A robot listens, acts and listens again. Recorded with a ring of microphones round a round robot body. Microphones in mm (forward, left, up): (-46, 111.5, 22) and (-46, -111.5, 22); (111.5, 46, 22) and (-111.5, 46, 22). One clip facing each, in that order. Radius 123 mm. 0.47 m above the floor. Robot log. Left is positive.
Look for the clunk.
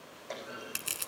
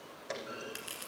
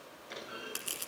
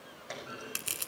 note: The clunk: 160° right.
cmd yaw -160
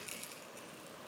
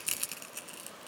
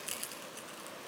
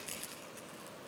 end: I heard a clunk from this way, but can't make it out now.